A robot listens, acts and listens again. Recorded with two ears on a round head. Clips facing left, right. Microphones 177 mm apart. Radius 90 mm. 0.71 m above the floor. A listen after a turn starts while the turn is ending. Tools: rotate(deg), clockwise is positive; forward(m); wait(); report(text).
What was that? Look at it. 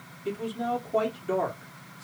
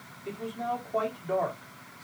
rotate(-40)
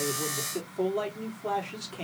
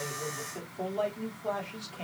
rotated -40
rotate(-85)
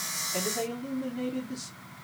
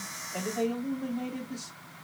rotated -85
rotate(-30)
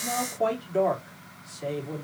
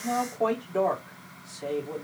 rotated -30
report("Found it: a man speaking, straight ahead.")